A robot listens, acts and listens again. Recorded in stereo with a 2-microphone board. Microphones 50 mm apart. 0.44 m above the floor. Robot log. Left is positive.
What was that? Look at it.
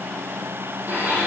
note: The blender: about 40° right or 140° right.
cmd yaw -40
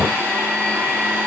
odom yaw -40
note: So it is at 100° right.
cmd yaw -100
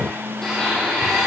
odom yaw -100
note: The blender is now 10° left.
cmd yaw +10
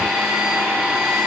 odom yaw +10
end: Found it: a blender, straight ahead, 2 to 4 m away.